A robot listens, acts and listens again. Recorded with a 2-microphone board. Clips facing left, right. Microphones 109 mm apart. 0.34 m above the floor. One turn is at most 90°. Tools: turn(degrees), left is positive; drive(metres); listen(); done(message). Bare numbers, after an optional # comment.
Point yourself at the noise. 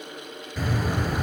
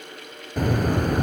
# The bird: about 50° right or 130° right.
turn(-50)
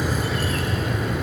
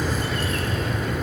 done("Facing the bird.")